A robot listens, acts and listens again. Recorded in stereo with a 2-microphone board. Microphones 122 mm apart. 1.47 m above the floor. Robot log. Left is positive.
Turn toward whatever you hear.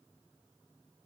cmd idle
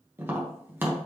note: The tapping: about 15° right or 165° right.
cmd yaw -15
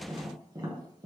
note: So it is at 150° right.
cmd yaw -150
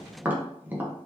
note: The tapping is now 15° right.
cmd yaw -15
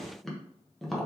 end: Facing the tapping.